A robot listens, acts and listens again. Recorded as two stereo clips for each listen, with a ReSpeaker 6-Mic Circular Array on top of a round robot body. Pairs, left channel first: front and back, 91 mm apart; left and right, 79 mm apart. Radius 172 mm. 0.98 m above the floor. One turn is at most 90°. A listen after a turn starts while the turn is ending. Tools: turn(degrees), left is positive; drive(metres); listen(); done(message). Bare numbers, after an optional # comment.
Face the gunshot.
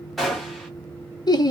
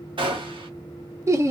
# The gunshot: 90° right.
turn(-90)
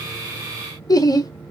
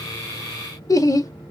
done("Facing where the gunshot came from. I can't hear it now.")